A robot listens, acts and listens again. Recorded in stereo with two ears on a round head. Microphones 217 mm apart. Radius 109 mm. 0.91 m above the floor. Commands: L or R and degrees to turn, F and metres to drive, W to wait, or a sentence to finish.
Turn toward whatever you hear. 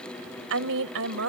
R60
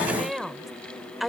Found it: a woman speaking, straight ahead.